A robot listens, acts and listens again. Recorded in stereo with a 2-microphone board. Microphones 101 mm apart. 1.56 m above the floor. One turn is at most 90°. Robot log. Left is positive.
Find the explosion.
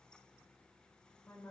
cmd idle
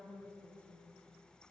cmd idle
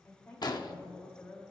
note: The explosion: about 45° left or 135° left.
cmd yaw +45
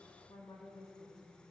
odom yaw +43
cmd idle
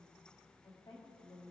end: I heard an explosion, but can't make it out now. It was about 5° left or 90° left.